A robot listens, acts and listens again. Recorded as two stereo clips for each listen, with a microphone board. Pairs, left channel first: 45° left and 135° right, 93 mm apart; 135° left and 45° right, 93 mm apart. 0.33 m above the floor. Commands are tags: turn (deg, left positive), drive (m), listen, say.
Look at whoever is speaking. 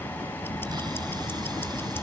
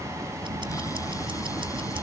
<listen/>
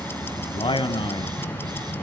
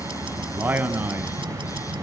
<turn deg="25"/>
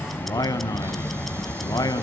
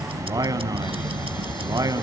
<say>Facing the man speaking, 2 to 4 m away.</say>